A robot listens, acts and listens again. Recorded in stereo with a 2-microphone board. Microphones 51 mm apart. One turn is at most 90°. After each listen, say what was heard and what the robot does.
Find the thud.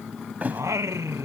The thud: about 35° right or 145° right. Turn 35° right.
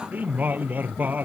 Keep listening.
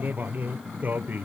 I heard a thud, but can't make it out now. It was about straight ahead or 110° right.